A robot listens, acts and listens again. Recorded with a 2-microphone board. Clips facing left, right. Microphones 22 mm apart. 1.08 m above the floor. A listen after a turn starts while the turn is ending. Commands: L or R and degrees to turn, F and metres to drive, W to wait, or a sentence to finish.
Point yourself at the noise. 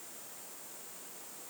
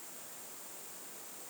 W
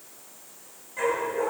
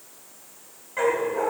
R25
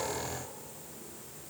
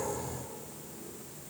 W
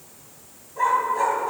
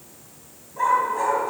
L10
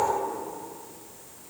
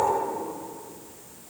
W
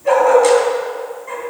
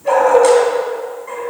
Facing the dog barking.